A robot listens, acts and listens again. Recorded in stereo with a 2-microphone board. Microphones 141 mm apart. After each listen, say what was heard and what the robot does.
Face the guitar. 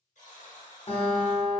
The guitar: about 45° left or 135° left. Turn 45° left.
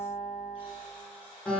Found it: a guitar, straight ahead.